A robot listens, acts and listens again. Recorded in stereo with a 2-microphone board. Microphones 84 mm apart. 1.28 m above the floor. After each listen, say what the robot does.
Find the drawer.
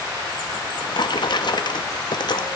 Turn 60° left.
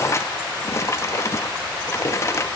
Turn 40° left.
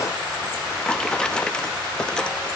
Turn 10° left.
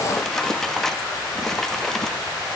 Facing the drawer, under 1 m away.